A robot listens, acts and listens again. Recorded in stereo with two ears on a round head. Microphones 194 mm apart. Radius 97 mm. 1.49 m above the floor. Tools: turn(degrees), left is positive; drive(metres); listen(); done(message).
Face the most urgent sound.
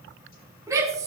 turn(degrees=-15)
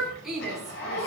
done("Facing the shout.")